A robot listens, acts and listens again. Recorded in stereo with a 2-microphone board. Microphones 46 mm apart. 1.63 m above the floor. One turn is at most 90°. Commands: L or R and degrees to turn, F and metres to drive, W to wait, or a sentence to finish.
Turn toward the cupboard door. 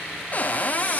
L35
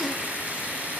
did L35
W
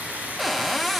Found it: a cupboard door, straight ahead, under 1 m away.